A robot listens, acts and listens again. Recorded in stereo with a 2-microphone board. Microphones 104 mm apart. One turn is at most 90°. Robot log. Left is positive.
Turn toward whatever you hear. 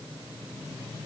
cmd idle
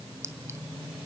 note: The clink: about 30° right or 150° right.
cmd yaw -30
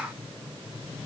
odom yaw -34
cmd idle
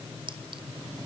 note: So it is at 115° right.
cmd yaw -90
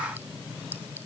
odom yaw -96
note: Nothing new. It was at 20° right.
cmd yaw -20
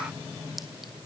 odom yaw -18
cmd idle
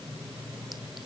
end: Facing where the clink came from. I can't hear it now.